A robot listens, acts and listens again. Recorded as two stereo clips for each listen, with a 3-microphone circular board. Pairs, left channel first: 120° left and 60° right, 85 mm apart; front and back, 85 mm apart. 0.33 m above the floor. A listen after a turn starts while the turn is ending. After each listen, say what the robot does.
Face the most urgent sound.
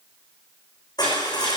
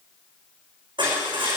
Keep listening.
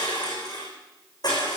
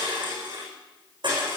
Keep listening.
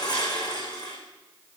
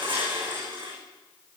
I can't make out anything urgent, only crushing.